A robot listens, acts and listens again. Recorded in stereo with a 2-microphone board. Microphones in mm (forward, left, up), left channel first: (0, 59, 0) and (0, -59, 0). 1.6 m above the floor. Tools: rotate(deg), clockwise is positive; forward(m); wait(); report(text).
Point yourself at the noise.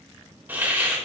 rotate(15)
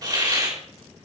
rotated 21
rotate(145)
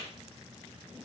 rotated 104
rotate(40)
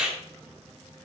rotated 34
rotate(10)
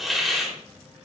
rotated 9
report("Found it: a hiss, straight ahead, 2 to 4 m away.")